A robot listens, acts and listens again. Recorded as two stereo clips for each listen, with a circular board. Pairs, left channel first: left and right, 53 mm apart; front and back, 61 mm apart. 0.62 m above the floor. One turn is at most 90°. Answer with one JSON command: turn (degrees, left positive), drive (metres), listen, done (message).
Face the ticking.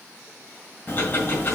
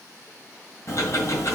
{"turn": 40}
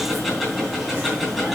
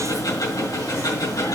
{"done": "Facing the ticking, 2 to 4 m away."}